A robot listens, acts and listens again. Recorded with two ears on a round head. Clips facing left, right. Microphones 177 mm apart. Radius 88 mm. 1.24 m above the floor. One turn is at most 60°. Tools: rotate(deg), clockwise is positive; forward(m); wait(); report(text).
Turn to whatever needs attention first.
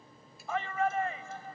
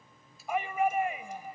rotate(30)
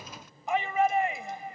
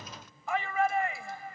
rotate(-20)
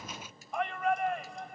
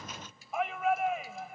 report("Found it: a shout, straight ahead.")